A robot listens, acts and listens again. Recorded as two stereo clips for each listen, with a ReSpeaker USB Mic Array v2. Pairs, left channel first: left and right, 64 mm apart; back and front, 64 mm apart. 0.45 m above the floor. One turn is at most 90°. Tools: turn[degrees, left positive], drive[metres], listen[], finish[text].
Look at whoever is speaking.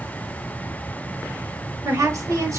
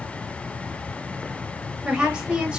Thought: The woman speaking: 75° right.
Action: turn[-75]
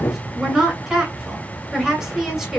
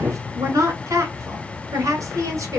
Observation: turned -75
Thought: The woman speaking is now 10° right.
Action: turn[-10]
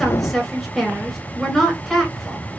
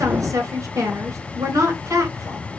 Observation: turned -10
Action: finish[Found it: a woman speaking, straight ahead, 2 to 4 m away.]